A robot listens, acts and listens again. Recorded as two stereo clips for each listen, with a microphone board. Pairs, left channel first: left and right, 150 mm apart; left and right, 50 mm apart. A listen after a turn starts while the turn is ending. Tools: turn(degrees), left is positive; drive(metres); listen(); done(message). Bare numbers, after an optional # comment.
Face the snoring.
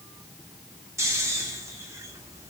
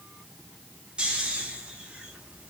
# The snoring: about 20° right or 160° right.
turn(-20)
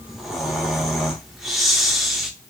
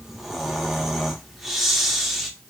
done("Found it: snoring, straight ahead, under 1 m away.")